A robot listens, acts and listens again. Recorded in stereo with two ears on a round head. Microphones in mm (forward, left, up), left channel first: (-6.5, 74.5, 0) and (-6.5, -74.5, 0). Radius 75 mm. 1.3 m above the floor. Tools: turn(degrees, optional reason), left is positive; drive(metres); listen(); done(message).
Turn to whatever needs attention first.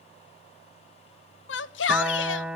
turn(degrees=90)
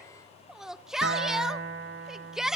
done("Facing the shout, 1 to 2 m away.")